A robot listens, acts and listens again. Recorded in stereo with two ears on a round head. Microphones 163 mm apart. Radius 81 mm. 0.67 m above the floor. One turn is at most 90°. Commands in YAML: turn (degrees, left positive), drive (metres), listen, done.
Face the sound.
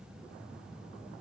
listen: true
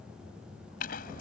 turn: 50
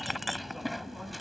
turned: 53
done: "Found it: a clink, straight ahead."